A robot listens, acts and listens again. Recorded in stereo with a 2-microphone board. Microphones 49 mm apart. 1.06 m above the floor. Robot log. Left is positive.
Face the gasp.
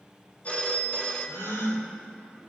cmd yaw +90
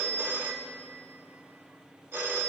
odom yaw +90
end: Facing where the gasp came from. I can't hear it now.